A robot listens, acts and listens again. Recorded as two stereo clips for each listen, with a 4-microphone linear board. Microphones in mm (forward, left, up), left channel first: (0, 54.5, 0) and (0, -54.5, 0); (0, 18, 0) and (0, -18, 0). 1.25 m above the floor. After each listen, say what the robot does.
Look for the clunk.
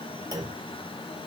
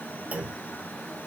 Turn 40° right.
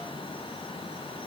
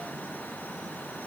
Keep listening.
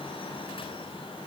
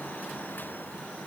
I heard a clunk, but can't make it out now. It was about straight ahead or 100° right.